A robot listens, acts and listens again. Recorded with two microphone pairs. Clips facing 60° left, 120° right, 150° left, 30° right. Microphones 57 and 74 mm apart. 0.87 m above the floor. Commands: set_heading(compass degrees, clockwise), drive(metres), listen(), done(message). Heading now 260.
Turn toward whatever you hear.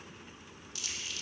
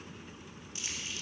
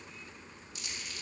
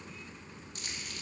set_heading(320)
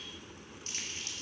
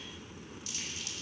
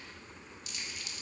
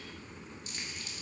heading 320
set_heading(305)
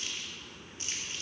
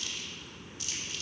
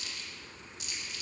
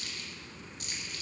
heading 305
done("Found it: crumpling, straight ahead.")